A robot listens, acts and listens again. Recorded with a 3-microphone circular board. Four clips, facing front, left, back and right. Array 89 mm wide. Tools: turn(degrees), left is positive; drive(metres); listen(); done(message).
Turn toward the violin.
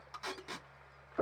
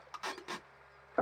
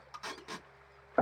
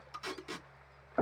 listen()
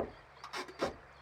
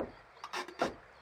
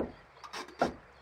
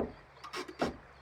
listen()
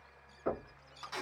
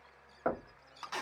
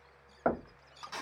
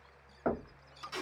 done("I can't make out a violin to turn to.")